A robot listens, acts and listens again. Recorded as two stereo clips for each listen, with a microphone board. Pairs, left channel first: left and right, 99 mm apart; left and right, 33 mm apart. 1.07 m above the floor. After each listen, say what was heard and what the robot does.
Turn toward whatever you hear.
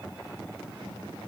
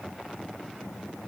Keep listening.
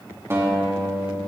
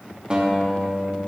The guitar: about 30° right or 150° right. Turn 30° right.
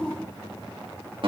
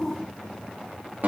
So it is at 120° right. Turn 120° right.
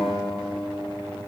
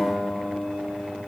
Facing the guitar, 2 to 4 m away.